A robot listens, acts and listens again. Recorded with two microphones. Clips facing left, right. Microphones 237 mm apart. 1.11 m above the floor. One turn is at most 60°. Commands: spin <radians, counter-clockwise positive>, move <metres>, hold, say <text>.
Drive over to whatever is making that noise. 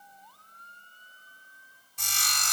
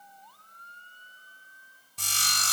spin -0.61
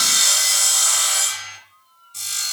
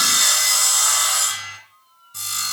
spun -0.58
spin -1.05
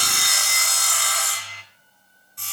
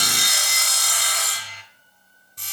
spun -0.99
spin -0.79
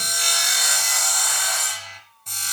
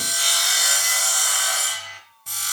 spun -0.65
spin -0.17
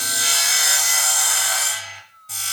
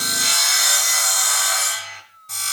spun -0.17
move 1.0
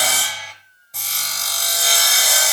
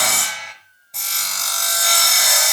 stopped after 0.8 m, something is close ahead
say Arrived at the sawing, straight ahead.